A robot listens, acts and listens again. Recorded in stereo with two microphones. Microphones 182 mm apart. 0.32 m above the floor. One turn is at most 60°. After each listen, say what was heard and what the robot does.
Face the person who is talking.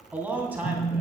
Turn 30° right.
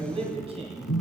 So it is at 140° right. Turn 60° right.
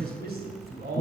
The man speaking is now 95° right. Turn 60° right.
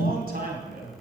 The man speaking is now 70° right. Turn 60° right.
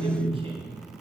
The man speaking is now 35° right. Turn 35° right.
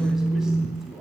Found it: a man speaking, straight ahead, 2 to 4 m away.